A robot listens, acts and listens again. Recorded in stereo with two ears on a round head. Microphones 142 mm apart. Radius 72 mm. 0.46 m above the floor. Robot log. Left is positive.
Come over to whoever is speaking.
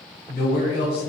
note: The man speaking: about 70° left or 110° left.
cmd yaw +70
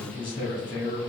note: So it is at 30° left.
cmd yaw +30
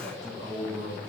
cmd fwd 1.0
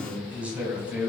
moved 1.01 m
note: The man speaking is now 10° right.
cmd yaw -10
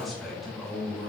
cmd fwd 1.0
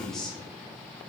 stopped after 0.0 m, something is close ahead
end: I am next to the man speaking.